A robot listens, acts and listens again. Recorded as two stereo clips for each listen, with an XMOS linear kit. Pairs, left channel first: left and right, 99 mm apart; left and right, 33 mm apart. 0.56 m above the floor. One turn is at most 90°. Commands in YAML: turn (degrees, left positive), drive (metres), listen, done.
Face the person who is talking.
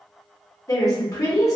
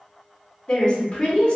turn: 35
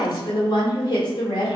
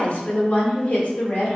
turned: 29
turn: 90
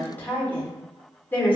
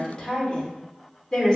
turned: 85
turn: 25
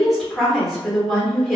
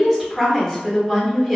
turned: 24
done: "Facing the woman speaking, 1 to 2 m away."